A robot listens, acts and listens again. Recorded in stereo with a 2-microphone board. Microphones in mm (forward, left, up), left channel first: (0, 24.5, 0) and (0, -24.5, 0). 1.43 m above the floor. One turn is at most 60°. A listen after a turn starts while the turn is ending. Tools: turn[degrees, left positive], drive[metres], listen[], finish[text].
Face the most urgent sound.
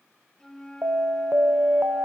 Thought: The alarm: about 60° right or 120° right.
Action: turn[-60]
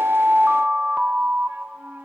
Thought: So it is at 20° right.
Action: turn[-20]
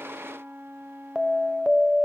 Action: finish[Found it: an alarm, straight ahead, 1 to 2 m away.]